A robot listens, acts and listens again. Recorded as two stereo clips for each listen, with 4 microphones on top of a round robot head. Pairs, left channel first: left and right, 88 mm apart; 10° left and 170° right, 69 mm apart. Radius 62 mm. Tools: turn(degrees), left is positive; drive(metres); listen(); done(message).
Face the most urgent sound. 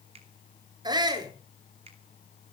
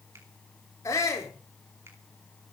turn(degrees=-50)
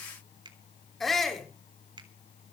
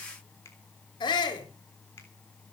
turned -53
done("Facing the shout, over 4 m away.")